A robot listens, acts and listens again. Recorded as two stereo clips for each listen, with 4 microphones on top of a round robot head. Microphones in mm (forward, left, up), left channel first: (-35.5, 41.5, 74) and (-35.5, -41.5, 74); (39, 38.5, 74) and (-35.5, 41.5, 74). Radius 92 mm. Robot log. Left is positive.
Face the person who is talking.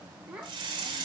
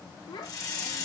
note: The child speaking: 15° right.
cmd yaw -15
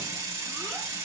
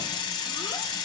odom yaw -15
cmd idle
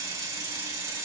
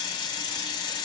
cmd idle
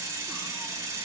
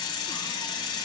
end: I heard a child speaking from this way, but can't make it out now.